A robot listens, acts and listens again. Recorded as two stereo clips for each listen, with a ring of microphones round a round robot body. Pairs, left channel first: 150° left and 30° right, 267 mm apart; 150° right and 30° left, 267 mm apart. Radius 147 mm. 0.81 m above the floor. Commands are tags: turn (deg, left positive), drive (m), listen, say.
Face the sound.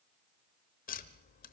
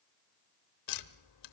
<turn deg="-150"/>
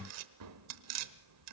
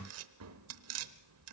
<say>Facing the tapping, under 1 m away.</say>